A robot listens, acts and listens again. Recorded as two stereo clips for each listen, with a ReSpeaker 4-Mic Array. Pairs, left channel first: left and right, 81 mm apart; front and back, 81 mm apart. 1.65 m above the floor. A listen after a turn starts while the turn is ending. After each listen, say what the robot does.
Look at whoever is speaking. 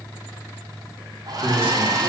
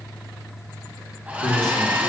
Turn 25° right.
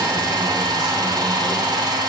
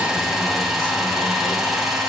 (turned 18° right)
Keep listening.
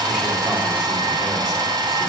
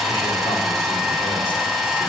Keep listening.
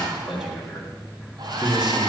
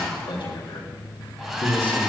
Facing the man speaking, 2 to 4 m away.